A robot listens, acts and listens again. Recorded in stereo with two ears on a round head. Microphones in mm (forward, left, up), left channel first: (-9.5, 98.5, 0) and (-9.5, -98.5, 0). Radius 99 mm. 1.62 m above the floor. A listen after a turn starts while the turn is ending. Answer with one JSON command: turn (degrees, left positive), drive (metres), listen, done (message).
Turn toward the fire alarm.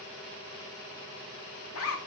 {"listen": true}
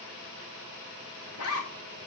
{"listen": true}
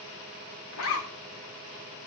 {"done": "I can't make out a fire alarm to turn to."}